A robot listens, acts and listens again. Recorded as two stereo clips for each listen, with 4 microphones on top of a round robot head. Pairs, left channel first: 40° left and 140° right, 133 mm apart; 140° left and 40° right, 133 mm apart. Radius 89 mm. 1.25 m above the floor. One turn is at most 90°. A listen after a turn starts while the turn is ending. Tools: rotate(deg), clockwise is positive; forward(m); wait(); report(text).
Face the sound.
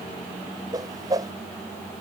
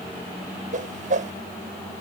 rotate(75)
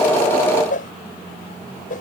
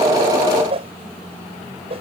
rotate(-10)
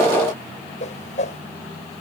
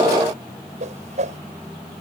report("Found it: a whoosh, straight ahead.")